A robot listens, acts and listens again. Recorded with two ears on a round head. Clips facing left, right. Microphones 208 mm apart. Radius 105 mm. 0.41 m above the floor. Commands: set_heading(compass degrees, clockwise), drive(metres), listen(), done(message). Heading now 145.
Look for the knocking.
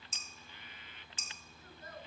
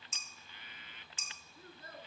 listen()
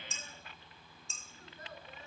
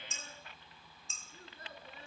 listen()
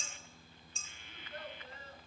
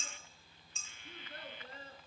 done("I can't make out knocking, only a child speaking and dishes clattering.")